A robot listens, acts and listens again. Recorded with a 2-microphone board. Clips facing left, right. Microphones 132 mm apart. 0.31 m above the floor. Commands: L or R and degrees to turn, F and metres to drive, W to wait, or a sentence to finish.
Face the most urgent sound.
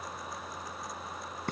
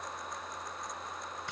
W
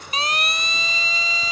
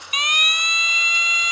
L30
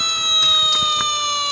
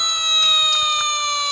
Found it: a siren, straight ahead.